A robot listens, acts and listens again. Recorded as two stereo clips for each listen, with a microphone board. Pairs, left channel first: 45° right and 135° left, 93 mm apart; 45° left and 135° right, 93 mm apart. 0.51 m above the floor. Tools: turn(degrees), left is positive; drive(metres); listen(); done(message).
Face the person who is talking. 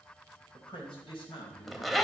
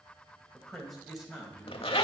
turn(degrees=-50)
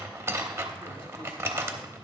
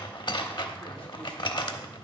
listen()
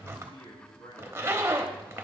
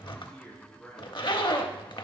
turn(degrees=-35)
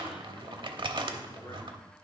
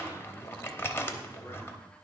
listen()
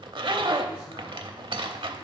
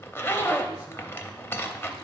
listen()
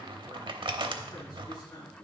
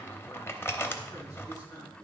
done("Found it: a man speaking, straight ahead, over 4 m away.")